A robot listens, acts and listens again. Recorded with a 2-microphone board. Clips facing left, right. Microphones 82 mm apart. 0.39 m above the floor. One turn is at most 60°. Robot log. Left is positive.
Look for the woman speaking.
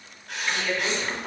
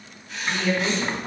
cmd yaw -30
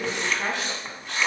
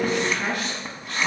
note: So it is at 25° left.
cmd yaw +25
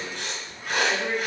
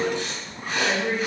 note: The woman speaking is now 10° right.
cmd yaw -10
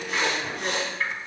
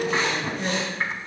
end: Facing the woman speaking.